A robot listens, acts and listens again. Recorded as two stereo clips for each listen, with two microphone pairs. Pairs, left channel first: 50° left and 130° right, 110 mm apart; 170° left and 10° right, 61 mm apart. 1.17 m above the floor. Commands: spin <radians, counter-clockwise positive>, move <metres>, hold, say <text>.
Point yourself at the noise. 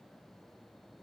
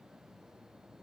hold
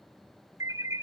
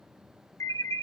spin 2.97
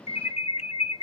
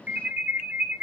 spin 0.87
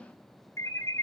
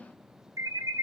spin -0.17
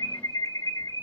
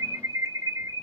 say Facing the alarm, under 1 m away.